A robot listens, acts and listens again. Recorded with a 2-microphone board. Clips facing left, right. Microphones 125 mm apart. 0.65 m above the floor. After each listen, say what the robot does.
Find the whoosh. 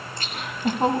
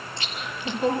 Keep listening.
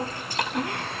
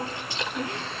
Keep listening.
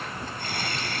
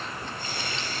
I can't make out a whoosh, only laughter and chewing.